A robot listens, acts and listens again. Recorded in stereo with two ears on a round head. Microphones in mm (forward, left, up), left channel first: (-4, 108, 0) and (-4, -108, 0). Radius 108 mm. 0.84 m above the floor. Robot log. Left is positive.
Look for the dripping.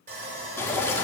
cmd yaw +30
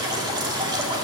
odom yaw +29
note: So it is at 20° right.
cmd yaw -20
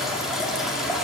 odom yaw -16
end: Facing the dripping.